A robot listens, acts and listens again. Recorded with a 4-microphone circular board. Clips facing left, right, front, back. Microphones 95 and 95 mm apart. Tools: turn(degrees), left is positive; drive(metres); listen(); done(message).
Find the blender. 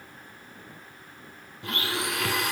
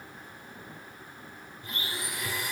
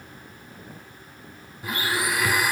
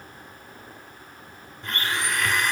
turn(degrees=85)
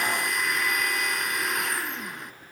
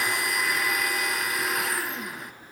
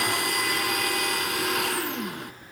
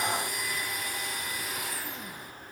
done("Facing the blender, 1 to 2 m away.")